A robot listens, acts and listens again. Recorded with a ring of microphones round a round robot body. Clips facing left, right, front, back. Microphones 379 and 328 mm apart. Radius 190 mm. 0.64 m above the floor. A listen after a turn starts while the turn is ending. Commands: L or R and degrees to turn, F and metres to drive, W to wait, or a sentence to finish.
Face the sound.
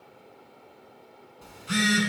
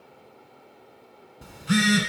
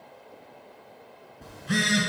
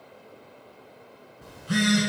R70
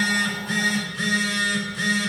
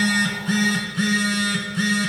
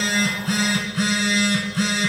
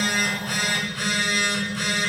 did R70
R20
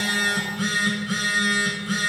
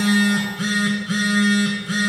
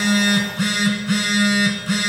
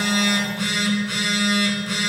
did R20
Facing the phone buzzing, 1 to 2 m away.